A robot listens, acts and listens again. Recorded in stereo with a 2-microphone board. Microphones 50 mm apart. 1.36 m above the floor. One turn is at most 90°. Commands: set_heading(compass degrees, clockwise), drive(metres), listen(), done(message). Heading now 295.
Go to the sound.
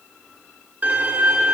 set_heading(330)
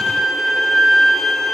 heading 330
drive(1.0)
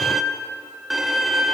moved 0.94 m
drive(1.0)
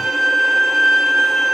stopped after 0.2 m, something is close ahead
done("I am next to the violin.")